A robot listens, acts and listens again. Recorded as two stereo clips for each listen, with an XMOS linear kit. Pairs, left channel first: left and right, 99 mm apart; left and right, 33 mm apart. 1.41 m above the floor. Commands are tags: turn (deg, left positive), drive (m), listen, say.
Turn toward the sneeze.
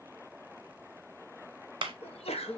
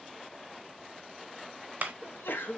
<turn deg="90"/>
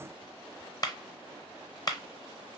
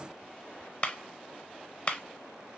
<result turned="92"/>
<say>I heard a sneeze from this way, but can't make it out now.</say>